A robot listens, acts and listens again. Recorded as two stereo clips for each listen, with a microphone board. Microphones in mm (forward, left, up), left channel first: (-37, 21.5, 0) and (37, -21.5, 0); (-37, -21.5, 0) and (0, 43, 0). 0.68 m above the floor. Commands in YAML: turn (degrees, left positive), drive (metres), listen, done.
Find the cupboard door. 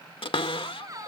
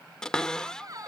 turn: 160
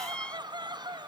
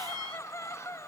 turn: 75
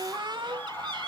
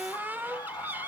done: "Facing the cupboard door."